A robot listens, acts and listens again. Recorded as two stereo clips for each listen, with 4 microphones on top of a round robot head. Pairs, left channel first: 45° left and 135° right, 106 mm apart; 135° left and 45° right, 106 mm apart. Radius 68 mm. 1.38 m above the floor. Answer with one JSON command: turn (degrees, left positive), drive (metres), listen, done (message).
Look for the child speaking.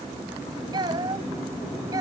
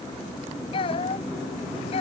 {"turn": 170}
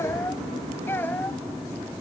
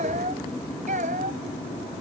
{"turn": -30}
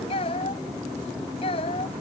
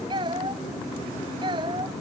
{"done": "Facing the child speaking."}